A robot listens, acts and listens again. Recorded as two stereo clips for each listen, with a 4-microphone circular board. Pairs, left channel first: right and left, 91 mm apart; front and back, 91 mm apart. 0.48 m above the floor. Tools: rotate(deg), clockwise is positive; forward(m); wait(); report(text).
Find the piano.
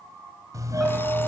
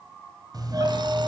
wait()
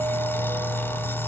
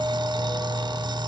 wait()
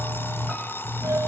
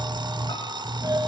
report("I can't make out a piano to turn to.")